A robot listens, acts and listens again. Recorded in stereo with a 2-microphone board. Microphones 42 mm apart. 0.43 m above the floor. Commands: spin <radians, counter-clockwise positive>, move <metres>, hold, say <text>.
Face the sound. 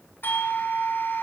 spin 0.96
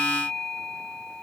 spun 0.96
spin 0.35
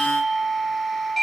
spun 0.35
say Found it: a doorbell, straight ahead, 2 to 4 m away.